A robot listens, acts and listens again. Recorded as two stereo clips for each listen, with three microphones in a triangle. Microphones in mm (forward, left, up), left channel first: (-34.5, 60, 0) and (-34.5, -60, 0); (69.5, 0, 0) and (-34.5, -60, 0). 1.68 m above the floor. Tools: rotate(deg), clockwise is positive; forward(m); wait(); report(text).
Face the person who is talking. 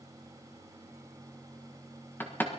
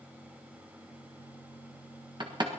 wait()
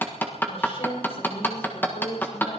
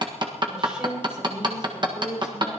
rotate(-125)
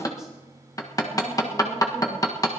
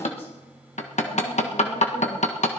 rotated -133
wait()
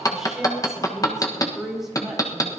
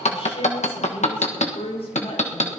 report("Facing the woman speaking.")